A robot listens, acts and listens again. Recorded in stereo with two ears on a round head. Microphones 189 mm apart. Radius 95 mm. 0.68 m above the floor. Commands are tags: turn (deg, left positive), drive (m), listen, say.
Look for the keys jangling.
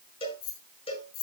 <turn deg="90"/>
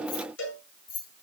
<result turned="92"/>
<turn deg="25"/>
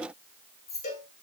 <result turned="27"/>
<turn deg="15"/>
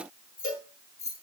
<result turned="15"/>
<turn deg="15"/>
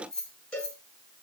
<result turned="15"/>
<say>Facing the keys jangling, 2 to 4 m away.</say>